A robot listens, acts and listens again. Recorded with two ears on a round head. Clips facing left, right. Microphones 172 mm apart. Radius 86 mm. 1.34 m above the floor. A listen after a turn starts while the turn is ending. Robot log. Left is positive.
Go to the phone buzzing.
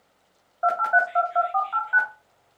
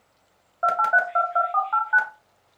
note: The phone buzzing: about 60° right or 120° right.
cmd yaw -60
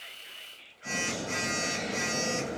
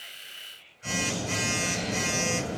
note: So it is at 50° right.
cmd yaw -50
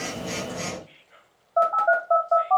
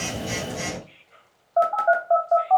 cmd fwd 1.0
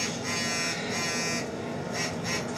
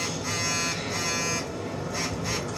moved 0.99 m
cmd fwd 1.0
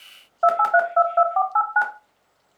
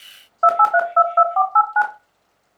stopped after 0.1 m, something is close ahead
note: The phone buzzing is now 10° left.
cmd yaw +10
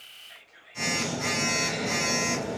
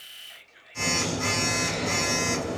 end: Arrived at the phone buzzing, straight ahead.